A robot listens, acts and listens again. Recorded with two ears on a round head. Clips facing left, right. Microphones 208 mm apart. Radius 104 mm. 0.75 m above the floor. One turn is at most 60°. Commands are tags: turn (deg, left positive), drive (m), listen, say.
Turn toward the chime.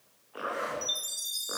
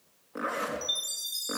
<turn deg="30"/>
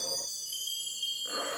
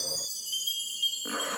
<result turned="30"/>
<turn deg="-25"/>
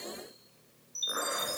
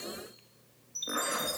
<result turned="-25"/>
<say>Found it: a chime, straight ahead.</say>